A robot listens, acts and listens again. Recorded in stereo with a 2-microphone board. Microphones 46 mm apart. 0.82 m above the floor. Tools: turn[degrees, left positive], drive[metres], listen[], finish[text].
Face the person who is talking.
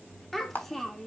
Action: turn[30]
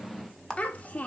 Thought: So it is at 145° left.
Action: turn[145]
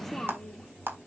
Thought: The child speaking is now 10° left.
Action: turn[10]
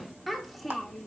Action: finish[Facing the child speaking, 1 to 2 m away.]